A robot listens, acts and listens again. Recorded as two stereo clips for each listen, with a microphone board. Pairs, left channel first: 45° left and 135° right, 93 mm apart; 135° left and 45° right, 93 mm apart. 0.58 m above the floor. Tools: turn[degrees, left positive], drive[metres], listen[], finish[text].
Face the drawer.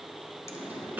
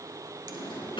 Thought: The drawer: 155° left.
Action: turn[155]
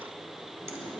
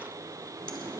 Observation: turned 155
Action: listen[]
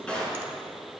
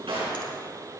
Thought: The drawer is now 30° right.
Action: turn[-30]
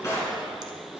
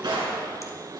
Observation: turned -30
Thought: The drawer is now 10° right.
Action: turn[-10]
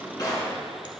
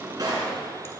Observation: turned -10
Action: finish[Facing the drawer, 2 to 4 m away.]